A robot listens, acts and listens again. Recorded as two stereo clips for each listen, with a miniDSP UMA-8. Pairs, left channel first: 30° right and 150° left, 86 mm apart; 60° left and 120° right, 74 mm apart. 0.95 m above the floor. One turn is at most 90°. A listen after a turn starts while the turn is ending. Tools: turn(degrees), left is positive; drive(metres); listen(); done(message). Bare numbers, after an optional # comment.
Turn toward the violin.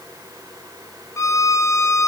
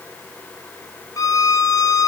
# The violin: 25° left.
turn(25)
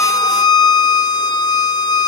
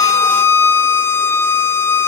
done("Found it: a violin, straight ahead.")